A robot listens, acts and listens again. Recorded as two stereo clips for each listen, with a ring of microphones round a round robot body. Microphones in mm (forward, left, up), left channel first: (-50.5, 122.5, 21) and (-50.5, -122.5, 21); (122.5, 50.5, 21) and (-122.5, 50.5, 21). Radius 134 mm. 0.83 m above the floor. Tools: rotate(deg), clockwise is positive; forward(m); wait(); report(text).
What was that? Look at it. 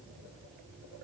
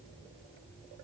wait()
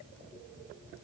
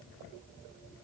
wait()
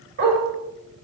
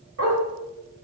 rotate(140)
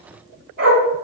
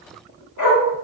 rotate(35)
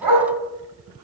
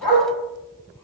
rotate(10)
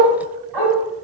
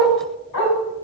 report("Facing the dog barking.")